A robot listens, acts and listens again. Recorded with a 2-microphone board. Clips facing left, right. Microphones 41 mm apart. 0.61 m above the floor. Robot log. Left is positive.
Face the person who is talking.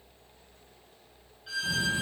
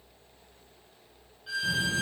note: The child speaking: about 65° right or 115° right.
cmd yaw -65
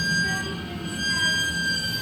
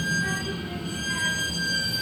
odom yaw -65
note: So it is at 40° right.
cmd yaw -40
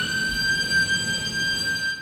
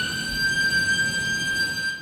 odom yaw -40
note: The child speaking is now 10° left.
cmd yaw +10
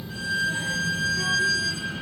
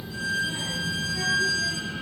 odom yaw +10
end: Facing the child speaking.